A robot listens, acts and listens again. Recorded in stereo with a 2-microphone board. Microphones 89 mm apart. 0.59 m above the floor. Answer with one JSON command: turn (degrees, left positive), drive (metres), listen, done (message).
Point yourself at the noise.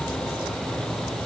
{"listen": true}
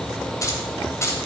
{"turn": 35}
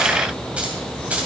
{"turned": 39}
{"turn": -15}
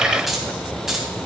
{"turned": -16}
{"done": "Facing the keys jangling."}